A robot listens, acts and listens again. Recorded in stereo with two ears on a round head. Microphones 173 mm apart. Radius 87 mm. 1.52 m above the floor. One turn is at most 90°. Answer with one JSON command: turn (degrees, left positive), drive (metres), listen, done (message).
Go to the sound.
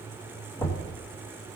{"turn": 30}
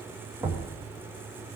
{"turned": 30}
{"turn": -15}
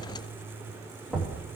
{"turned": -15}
{"drive": 1.0}
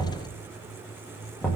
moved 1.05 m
{"drive": 1.0}
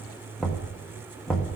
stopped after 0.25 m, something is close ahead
{"done": "I am next to the knocking."}